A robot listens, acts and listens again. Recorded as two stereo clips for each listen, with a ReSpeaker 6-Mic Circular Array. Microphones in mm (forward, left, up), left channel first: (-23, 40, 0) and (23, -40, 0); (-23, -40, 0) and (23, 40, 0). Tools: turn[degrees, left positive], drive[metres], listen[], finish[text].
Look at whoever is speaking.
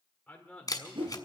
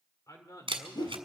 Thought: The man speaking: 160° right.
Action: turn[-160]
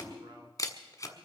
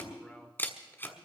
Thought: The man speaking is now 25° right.
Action: turn[-25]
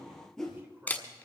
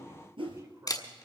Action: listen[]
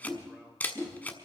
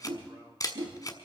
Action: listen[]
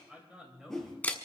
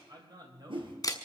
Thought: The man speaking is now 25° left.
Action: turn[25]
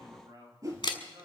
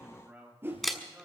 Thought: The man speaking is now 15° right.
Action: turn[-15]
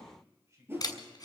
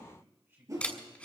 Action: finish[Found it: a man speaking, straight ahead.]